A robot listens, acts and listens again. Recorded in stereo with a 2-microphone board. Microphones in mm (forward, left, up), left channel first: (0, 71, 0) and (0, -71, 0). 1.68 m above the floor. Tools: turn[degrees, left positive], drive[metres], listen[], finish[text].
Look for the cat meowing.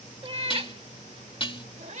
Thought: The cat meowing: about 55° right or 125° right.
Action: turn[-55]
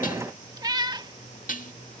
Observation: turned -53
Thought: So it is at 30° right.
Action: turn[-30]
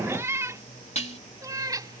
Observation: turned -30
Thought: The cat meowing is now 25° right.
Action: turn[-25]
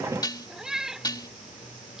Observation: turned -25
Action: finish[Found it: a cat meowing, straight ahead.]